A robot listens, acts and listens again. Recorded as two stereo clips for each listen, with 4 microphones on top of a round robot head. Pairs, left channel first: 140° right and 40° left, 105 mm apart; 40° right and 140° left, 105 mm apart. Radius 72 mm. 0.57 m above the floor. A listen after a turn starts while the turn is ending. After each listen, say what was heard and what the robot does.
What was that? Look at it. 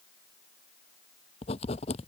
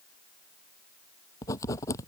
The writing: 105° right. Turn 105° right.
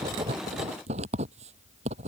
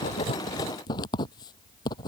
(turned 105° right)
The writing is now 15° left. Turn 15° left.
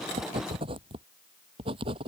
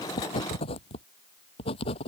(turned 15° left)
Found it: writing, straight ahead.